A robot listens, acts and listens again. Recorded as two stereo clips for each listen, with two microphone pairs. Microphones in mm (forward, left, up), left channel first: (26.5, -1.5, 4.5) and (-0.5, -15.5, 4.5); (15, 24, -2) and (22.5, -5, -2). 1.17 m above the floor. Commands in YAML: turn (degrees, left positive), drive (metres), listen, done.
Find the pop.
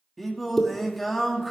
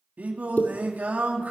turn: 105
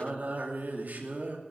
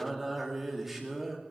done: "Facing where the pop came from. I can't hear it now."